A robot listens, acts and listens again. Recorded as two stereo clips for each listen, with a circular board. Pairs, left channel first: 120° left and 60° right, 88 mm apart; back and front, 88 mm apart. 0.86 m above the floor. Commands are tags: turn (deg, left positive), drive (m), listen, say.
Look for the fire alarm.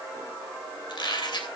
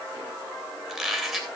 <listen/>
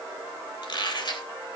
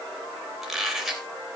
<listen/>
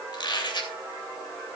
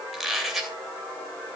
<say>I can't make out a fire alarm to turn to.</say>